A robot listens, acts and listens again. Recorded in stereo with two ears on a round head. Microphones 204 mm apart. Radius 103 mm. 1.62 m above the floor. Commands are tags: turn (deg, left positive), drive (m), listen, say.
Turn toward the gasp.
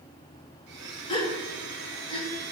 <turn deg="20"/>
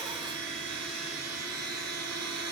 <listen/>
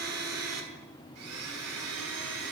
<say>I heard a gasp, but can't make it out now. It was about straight ahead or 140° left.</say>